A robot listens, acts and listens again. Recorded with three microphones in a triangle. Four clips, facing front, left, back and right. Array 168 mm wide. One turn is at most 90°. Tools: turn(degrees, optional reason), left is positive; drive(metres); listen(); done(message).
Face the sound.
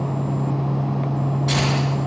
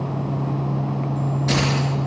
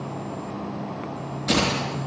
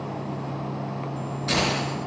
turn(degrees=90, reason="The keys jangling: 145° left.")
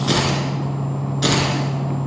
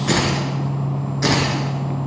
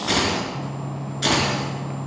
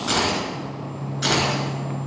turn(degrees=35, reason="The keys jangling is now 35° left.")
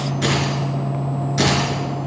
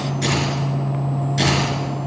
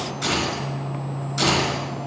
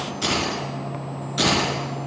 turn(degrees=-20, reason="The keys jangling is now 20° right.")
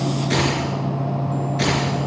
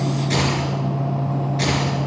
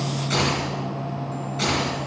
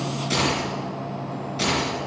turn(degrees=-10, reason="The keys jangling is now 10° right.")
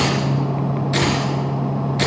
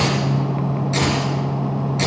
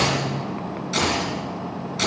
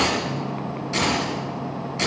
done("Found it: keys jangling, straight ahead.")